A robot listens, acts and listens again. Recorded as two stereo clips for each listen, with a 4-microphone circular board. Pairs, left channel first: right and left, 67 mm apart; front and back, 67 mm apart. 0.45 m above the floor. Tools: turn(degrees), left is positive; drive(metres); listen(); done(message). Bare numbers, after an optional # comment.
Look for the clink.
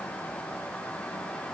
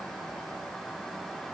listen()
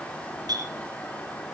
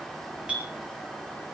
# The clink: 105° left.
turn(105)
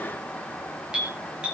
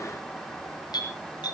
# The clink is now 15° left.
turn(15)
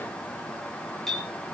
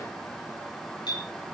done("Facing the clink.")